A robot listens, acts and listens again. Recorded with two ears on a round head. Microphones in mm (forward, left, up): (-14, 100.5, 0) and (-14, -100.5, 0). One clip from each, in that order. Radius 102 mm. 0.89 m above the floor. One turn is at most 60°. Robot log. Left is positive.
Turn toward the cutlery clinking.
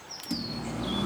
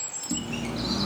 note: The cutlery clinking: about 35° right or 145° right.
cmd yaw -35
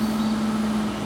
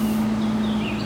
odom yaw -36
end: Found it: cutlery clinking, straight ahead, over 4 m away.